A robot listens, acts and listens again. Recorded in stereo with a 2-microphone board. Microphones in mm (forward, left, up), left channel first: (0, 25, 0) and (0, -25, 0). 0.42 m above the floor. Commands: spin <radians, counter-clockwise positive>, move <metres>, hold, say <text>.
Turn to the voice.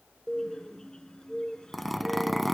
hold
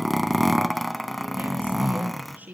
spin -0.61
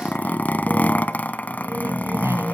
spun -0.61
hold
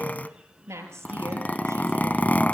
spin -1.92
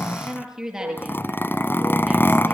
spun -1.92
spin -0.17
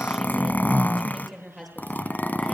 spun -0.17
say Found it: a woman speaking, straight ahead.